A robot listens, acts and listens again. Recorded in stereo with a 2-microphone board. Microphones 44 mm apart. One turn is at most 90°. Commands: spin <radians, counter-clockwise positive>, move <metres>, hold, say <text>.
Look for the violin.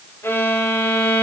spin 1.13
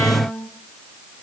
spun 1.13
spin 0.87
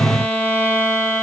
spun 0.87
spin 0.52
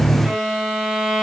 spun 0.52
spin -0.17
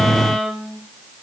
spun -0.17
say Facing the violin.